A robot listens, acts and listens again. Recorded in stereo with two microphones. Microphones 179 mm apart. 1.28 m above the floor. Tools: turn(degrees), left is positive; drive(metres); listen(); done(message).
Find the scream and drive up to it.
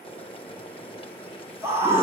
turn(degrees=-30)
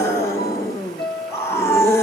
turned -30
turn(degrees=15)
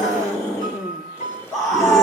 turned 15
drive(metres=1.0)
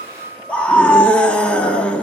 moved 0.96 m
drive(metres=1.0)
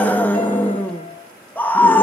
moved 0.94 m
turn(degrees=10)
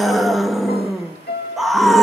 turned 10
drive(metres=1.0)
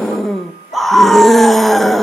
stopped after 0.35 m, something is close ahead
done("Arrived at the scream, straight ahead.")